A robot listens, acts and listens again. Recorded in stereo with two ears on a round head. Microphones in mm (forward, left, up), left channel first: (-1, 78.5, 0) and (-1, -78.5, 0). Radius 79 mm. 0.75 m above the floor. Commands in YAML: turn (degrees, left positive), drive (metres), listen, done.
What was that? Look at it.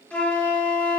turn: 30
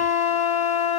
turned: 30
turn: 140
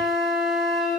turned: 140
done: "Facing the flute, 1 to 2 m away."